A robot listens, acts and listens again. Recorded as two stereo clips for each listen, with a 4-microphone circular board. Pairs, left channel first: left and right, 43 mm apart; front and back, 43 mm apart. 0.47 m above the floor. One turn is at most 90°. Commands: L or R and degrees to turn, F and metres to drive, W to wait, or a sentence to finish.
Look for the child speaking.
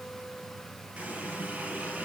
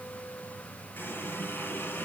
W
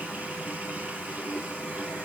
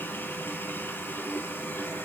W
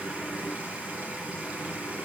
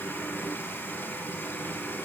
I can't make out a child speaking to turn to.